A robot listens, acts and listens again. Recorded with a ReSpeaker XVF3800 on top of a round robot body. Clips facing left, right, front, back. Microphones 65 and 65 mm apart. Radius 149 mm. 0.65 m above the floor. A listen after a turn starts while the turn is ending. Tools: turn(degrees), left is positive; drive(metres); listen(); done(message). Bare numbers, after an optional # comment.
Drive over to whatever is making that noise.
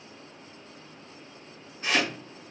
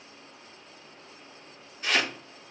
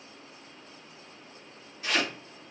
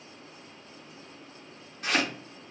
# The chopping: 150° left.
turn(150)
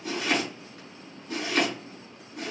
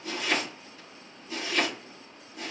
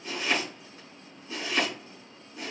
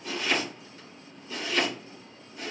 # The chopping is now 55° left.
turn(55)
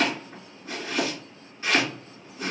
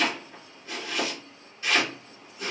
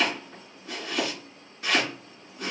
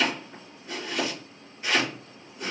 # The chopping is now 30° left.
turn(30)
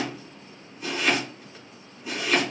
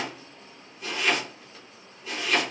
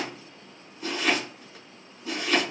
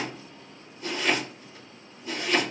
# The chopping is now 10° left.
turn(10)
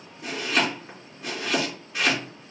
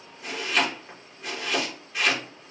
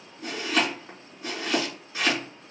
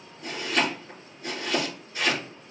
drive(1.0)
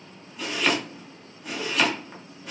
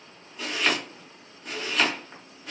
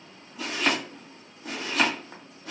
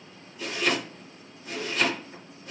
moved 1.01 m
drive(1.0)
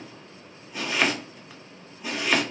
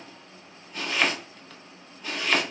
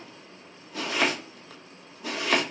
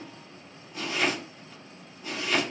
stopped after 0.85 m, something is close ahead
# The chopping is now 10° left.
turn(10)
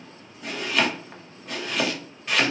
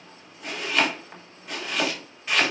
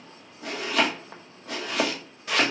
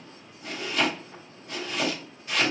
done("I am next to the chopping.")